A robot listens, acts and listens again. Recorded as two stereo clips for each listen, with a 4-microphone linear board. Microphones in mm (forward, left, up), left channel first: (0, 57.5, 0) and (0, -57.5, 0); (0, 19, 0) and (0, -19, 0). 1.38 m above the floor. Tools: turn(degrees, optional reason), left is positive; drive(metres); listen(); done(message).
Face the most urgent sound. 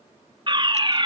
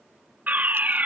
turn(degrees=-45, reason="The fire alarm: about 45° right or 135° right.")
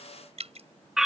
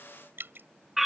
done("Found it: a fire alarm, straight ahead.")